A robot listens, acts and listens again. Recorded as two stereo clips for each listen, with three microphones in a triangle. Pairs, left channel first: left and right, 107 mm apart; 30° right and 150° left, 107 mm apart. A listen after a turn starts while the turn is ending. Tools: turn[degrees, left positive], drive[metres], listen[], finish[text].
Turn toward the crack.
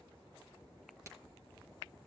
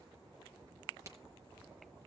Thought: The crack: 150° right.
Action: turn[-150]
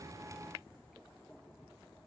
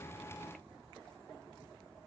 Action: finish[I heard a crack from this way, but can't make it out now.]